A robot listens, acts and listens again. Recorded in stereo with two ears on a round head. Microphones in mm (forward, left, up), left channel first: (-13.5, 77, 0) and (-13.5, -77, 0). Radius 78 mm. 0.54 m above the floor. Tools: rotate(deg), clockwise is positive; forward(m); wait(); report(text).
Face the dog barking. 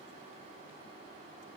wait()
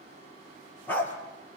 rotate(-30)
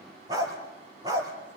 rotate(20)
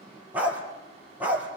rotate(10)
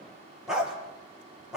report("Found it: a dog barking, straight ahead.")